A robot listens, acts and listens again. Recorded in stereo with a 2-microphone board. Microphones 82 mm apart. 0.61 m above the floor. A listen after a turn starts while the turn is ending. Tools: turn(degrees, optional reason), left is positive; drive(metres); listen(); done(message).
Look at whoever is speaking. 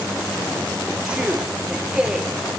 turn(degrees=-30)
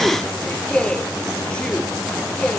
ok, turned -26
turn(degrees=15, reason="So it is at 15° left.")
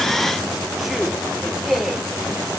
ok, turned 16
done("Facing the man speaking, 1 to 2 m away.")